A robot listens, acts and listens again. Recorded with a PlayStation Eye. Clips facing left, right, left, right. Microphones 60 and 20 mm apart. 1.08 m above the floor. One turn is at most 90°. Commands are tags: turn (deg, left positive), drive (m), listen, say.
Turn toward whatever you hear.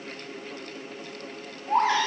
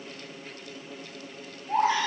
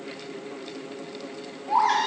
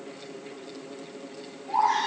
<turn deg="90"/>
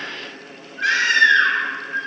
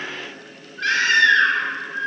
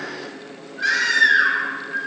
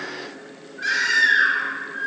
<turn deg="10"/>
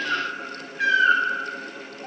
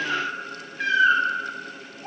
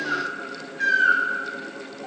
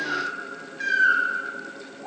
<say>Facing the baby crying.</say>